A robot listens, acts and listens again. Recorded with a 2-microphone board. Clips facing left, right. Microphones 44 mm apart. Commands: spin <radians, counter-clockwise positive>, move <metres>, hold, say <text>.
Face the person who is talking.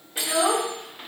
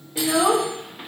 spin -0.52
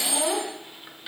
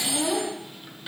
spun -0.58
spin 0.44
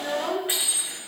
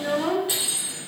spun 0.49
say Found it: a child speaking, straight ahead.